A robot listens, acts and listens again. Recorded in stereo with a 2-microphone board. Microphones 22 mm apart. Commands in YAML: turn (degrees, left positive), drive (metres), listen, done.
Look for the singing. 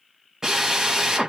listen: true
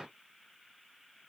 listen: true
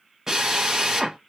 done: "I can't make out singing, only a drill."